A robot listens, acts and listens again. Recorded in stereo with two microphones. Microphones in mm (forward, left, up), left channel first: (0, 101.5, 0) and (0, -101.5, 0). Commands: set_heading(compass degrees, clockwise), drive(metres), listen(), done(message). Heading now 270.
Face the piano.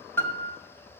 set_heading(240)
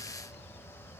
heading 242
listen()
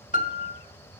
set_heading(102)
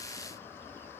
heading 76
set_heading(101)
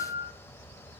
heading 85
set_heading(105)
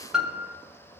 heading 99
done("Found it: a piano, straight ahead, under 1 m away.")